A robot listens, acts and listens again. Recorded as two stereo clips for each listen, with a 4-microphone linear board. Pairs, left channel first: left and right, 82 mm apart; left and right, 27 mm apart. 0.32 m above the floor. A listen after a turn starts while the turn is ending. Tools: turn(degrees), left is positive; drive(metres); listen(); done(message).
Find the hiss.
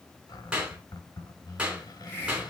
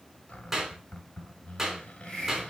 turn(degrees=25)
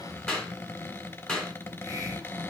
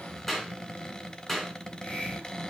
listen()
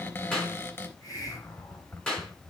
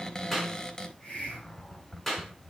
turn(degrees=125)
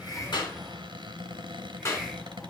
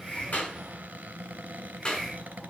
done("Found it: a hiss, straight ahead, 2 to 4 m away.")